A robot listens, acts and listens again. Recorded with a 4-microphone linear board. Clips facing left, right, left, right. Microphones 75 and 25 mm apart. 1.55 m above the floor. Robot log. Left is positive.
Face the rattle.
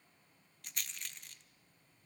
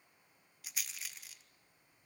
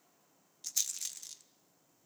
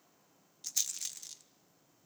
cmd yaw -30
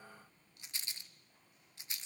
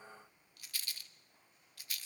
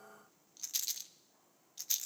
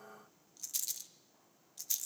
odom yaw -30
note: So it is at 25° left.
cmd yaw +25
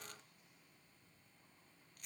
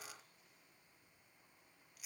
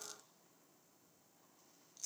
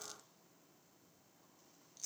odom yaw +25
end: Found it: a rattle, straight ahead.